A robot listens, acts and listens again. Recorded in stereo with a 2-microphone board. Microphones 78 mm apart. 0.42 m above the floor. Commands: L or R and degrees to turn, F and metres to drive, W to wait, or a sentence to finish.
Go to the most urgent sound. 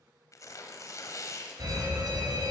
R50
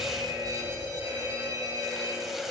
R65
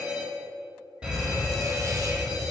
R15
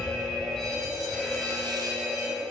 F1.0
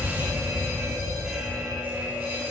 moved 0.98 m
R15
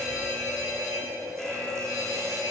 F1.0
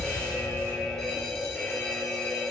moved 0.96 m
F1.0
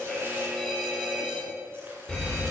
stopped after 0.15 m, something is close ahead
I am next to the fire alarm.